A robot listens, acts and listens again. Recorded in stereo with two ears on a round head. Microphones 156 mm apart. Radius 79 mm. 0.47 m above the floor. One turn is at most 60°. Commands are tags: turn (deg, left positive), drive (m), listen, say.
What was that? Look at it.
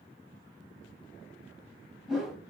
<turn deg="30"/>
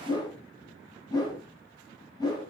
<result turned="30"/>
<turn deg="60"/>
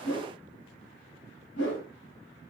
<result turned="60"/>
<turn deg="60"/>
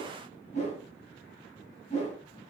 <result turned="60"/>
<turn deg="40"/>
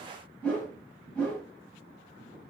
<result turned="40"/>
<say>Found it: a whoosh, straight ahead.</say>